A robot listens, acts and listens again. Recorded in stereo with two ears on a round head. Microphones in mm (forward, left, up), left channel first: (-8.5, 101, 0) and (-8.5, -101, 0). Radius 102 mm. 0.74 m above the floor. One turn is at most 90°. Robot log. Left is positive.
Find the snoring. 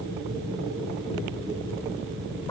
cmd idle
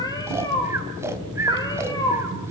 cmd yaw -30
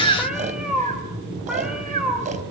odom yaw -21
note: So it is at 145° right.
cmd yaw -90
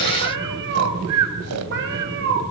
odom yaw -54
note: The snoring is now 95° right.
cmd yaw -90
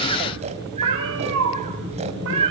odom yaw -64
note: The snoring is now 30° right.
cmd yaw -30
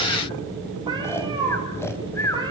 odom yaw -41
note: The snoring is now 10° left.
cmd yaw +10
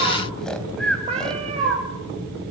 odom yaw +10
end: Found it: snoring, straight ahead.